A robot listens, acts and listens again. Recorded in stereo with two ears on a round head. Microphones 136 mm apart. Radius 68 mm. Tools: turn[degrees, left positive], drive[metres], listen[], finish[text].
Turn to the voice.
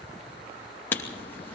Action: listen[]
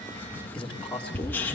Action: turn[30]
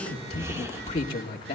Thought: So it is at 140° left.
Action: turn[140]
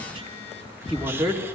Action: finish[Facing the man speaking.]